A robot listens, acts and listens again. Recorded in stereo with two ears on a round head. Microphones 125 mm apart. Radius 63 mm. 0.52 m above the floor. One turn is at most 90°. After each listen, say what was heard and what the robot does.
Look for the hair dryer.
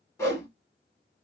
Keep listening.
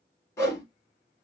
Keep listening.
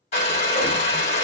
The hair dryer: about 45° left or 135° left. Turn 45° left.
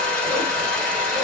So it is at 10° left. Turn 10° left.
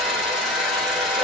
Found it: a hair dryer, straight ahead, 1 to 2 m away.